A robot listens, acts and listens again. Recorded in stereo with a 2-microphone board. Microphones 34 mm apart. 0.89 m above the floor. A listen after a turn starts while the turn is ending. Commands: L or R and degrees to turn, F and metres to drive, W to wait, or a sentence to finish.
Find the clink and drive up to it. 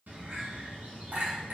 R70
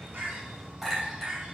F1.0
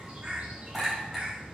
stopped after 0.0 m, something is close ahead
Something is in my way. I am facing the clink but have not reached it.